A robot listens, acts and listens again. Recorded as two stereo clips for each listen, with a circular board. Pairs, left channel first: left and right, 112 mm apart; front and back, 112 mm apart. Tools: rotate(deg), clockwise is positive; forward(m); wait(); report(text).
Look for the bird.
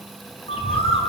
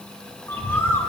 rotate(-70)
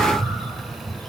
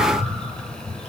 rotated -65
report("Found it: a bird, straight ahead.")